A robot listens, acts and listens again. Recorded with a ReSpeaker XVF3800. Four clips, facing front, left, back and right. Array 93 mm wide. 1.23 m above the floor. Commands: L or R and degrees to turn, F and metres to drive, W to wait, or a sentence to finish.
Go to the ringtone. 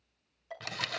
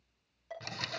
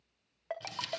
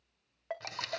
R140
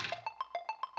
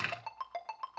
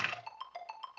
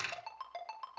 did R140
F1.0
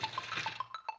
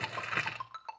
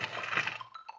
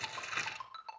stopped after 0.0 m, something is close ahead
Something is in my way. I am facing the ringtone but have not reached it.